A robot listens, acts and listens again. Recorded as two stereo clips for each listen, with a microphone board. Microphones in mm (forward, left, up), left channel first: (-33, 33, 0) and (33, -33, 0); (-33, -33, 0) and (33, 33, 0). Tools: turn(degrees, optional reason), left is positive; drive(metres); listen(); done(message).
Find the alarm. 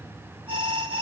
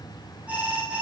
turn(degrees=-30, reason="The alarm: 30° right.")
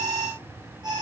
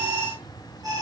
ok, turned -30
done("Found it: an alarm, straight ahead, over 4 m away.")